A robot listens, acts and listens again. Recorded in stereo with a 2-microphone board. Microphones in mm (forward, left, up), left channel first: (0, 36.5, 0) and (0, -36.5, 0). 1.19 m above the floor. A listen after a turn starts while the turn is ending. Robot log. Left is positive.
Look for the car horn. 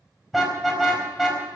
cmd yaw +30
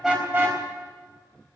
note: So it is at 30° right.
cmd yaw -30
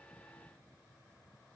cmd idle
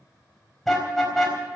end: Facing the car horn, over 4 m away.